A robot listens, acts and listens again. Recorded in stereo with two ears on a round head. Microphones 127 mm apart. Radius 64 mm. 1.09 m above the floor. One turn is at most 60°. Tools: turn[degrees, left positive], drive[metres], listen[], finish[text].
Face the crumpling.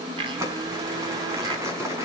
Thought: The crumpling: about 20° right or 160° right.
Action: turn[-20]
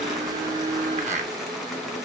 Action: listen[]
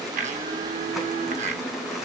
Action: listen[]
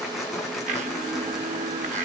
Action: finish[Facing the crumpling.]